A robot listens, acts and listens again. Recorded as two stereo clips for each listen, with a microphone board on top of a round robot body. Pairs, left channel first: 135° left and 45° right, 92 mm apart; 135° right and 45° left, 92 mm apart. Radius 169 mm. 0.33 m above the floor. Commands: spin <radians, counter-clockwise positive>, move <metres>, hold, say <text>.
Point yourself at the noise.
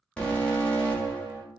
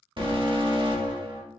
spin 0.96
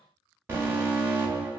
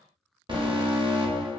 spin 0.35
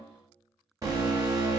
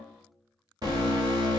say Facing the alarm, 1 to 2 m away.